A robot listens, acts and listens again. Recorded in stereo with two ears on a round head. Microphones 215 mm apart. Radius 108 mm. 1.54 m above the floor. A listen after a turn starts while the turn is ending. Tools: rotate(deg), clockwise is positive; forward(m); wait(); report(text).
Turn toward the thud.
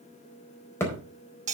rotate(-30)
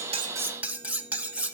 wait()
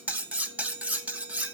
report("I heard a thud, but can't make it out now. It was about 20° right or 140° left.")